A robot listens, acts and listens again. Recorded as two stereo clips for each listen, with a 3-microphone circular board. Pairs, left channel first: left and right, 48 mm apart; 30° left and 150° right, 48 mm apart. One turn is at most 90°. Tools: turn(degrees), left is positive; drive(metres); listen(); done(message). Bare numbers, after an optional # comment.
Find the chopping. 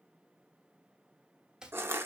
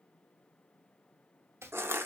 # The chopping: 165° right.
turn(-90)
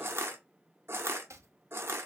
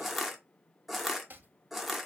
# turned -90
# The chopping is now 100° right.
turn(-90)
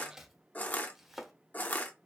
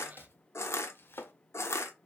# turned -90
done("Facing the chopping, under 1 m away.")